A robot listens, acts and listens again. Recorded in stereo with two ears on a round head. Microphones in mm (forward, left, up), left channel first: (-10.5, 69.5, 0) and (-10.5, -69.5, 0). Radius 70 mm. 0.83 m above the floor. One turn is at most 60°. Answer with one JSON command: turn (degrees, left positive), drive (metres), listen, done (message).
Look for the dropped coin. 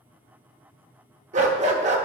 {"listen": true}
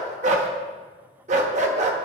{"listen": true}
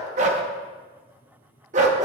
{"done": "I can't make out a dropped coin to turn to."}